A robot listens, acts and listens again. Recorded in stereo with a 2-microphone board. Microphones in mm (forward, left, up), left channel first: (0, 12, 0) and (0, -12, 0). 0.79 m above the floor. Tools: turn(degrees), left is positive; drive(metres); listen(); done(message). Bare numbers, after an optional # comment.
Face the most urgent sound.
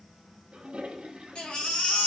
# The baby crying: about 55° left or 125° left.
turn(55)
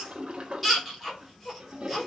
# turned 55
done("Facing the baby crying.")